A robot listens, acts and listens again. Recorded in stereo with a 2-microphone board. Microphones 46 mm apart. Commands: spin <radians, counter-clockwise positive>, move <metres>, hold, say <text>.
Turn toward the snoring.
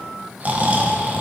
spin -0.61
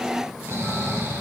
spin -1.92
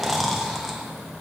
say Found it: snoring, straight ahead, under 1 m away.